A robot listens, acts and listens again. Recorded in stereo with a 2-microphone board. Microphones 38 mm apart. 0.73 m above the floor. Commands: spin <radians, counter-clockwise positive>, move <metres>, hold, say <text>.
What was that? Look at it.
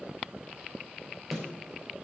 spin -0.52
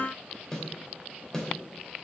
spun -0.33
spin 0.17
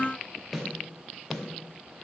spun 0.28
say Facing the snare drum, 2 to 4 m away.